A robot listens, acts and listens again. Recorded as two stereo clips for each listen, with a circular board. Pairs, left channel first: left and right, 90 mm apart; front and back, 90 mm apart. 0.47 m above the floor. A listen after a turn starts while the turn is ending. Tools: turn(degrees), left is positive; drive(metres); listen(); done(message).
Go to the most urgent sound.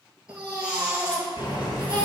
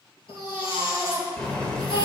turn(degrees=-10)
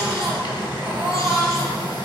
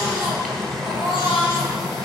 drive(metres=1.0)
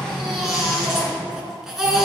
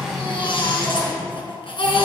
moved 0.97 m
drive(metres=1.0)
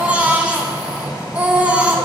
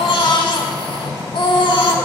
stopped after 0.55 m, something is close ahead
turn(degrees=-15)
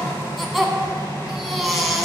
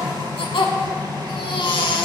done("I am next to the baby crying.")